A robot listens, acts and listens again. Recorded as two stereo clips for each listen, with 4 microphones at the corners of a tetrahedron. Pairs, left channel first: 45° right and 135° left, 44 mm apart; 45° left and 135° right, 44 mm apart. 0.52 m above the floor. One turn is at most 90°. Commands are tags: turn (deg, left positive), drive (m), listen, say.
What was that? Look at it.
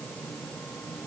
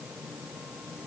<listen/>
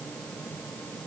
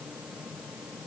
<listen/>
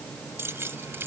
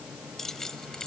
<turn deg="90"/>
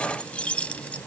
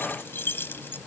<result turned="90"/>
<turn deg="15"/>
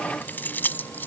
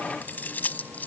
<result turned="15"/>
<say>Found it: keys jangling, straight ahead.</say>